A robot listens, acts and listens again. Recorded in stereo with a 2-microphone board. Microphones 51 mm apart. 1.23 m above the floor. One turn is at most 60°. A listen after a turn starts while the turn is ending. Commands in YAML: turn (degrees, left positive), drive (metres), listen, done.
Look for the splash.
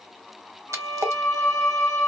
turn: -60
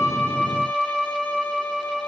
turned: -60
listen: true
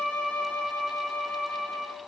done: "I heard a splash, but can't make it out now. It was about 10° right or 50° right."